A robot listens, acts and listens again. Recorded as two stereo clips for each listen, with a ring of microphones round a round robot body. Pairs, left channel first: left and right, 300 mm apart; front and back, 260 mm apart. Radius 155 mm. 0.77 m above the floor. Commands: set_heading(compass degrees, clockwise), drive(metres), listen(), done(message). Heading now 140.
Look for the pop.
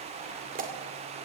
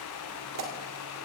set_heading(290)
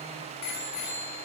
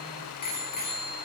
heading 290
done("I heard a pop from this way, but can't make it out now.")